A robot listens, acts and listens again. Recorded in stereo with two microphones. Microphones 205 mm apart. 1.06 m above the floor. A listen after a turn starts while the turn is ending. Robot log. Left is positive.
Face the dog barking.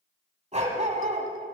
note: The dog barking: about 35° right or 145° right.
cmd yaw -35
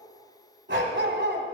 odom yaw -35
note: So it is at 105° right.
cmd yaw -105
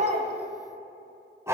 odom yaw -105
note: The dog barking is now 15° right.
cmd yaw -15
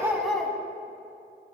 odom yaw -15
end: Found it: a dog barking, straight ahead, 1 to 2 m away.